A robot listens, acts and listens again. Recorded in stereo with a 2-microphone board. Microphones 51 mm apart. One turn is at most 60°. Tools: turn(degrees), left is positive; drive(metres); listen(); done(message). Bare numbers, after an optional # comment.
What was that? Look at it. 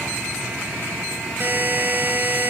# The buzzer: about 45° right or 135° right.
turn(-45)
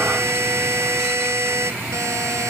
# So it is at 90° right.
turn(-60)
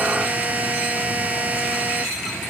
# The buzzer is now 25° right.
turn(-25)
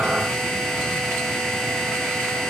listen()
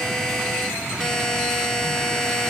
# The buzzer is now 10° left.
turn(10)
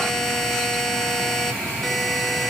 done("Found it: a buzzer, straight ahead, under 1 m away.")